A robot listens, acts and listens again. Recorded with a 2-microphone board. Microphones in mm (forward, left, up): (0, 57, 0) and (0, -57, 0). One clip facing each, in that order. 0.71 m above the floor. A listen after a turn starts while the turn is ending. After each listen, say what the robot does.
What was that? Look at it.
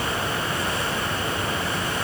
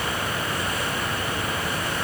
Keep listening.
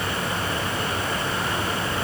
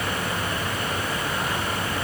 Keep listening.
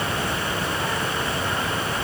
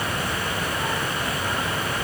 I can't make out anything.